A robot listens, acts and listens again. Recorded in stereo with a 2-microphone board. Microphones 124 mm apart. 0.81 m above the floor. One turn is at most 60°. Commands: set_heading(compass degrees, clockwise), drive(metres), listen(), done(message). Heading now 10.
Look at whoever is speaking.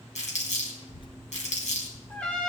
set_heading(330)
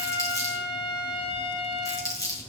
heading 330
listen()
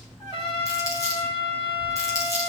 set_heading(270)
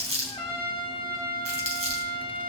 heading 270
set_heading(235)
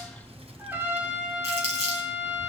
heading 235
set_heading(290)
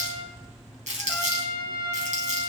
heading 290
done("Found it: a child speaking, straight ahead, under 1 m away.")